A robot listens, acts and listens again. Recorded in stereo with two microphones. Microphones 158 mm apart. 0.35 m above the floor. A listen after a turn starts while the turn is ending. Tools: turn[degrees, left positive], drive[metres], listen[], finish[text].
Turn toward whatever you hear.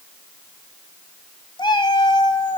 Thought: The cat meowing: about 30° left or 150° left.
Action: turn[30]
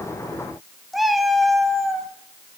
Action: finish[Found it: a cat meowing, straight ahead, under 1 m away.]